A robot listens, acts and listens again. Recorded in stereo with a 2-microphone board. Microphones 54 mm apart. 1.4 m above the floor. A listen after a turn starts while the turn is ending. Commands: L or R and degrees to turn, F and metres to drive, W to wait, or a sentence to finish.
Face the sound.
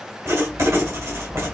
R65
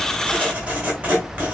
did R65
R30
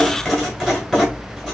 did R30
L10
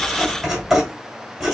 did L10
Found it: writing, straight ahead.